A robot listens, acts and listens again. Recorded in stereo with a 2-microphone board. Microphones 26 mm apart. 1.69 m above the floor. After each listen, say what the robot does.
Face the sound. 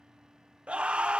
Turn 50° right.
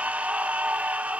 Turn 75° right.
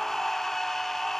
Turn 15° left.
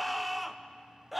Facing the scream, 1 to 2 m away.